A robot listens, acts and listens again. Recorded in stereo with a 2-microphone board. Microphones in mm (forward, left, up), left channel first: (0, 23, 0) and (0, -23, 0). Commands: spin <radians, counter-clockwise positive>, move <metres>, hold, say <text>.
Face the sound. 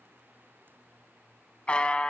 spin 0.44
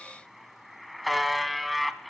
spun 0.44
say Found it: a buzzer, straight ahead.